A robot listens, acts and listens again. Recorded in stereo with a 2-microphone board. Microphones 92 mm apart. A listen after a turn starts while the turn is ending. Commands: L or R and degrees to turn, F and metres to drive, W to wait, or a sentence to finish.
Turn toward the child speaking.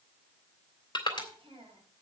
R90
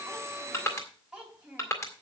R10
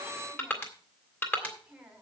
R10
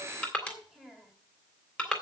Found it: a child speaking, straight ahead, 2 to 4 m away.